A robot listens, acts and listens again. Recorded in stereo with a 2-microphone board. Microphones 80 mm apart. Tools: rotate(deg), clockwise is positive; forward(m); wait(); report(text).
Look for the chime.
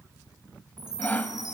rotate(60)
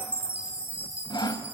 rotate(25)
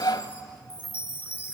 rotate(20)
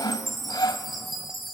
report("Found it: a chime, straight ahead.")